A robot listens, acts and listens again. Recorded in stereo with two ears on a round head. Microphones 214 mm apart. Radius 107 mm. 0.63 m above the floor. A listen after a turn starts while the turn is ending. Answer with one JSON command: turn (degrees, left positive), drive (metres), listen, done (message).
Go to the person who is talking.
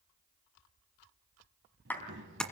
{"turn": -50}
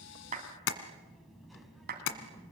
{"drive": 1.0}
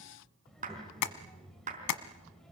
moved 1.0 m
{"drive": 1.0}
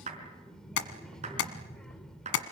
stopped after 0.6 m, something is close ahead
{"done": "Arrived at the child speaking, straight ahead."}